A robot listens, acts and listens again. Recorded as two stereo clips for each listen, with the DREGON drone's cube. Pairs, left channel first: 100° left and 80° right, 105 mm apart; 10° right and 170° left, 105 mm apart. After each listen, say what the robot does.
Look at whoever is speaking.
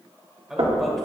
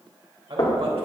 Turn 165° right.
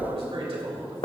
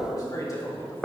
Turn 70° right.
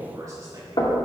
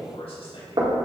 Turn 30° right.
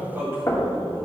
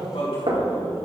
Turn 15° right.
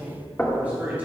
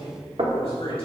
Facing the man speaking, over 4 m away.